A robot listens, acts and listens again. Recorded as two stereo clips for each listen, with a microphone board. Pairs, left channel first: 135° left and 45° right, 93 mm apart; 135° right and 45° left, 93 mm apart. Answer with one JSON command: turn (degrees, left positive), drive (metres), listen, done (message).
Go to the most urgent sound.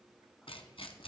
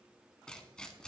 {"listen": true}
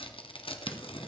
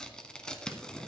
{"listen": true}
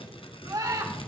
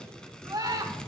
{"drive": 1.0}
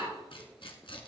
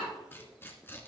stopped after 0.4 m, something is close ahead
{"listen": true}
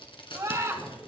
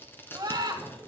{"done": "Blocked. The scream is further on, straight ahead."}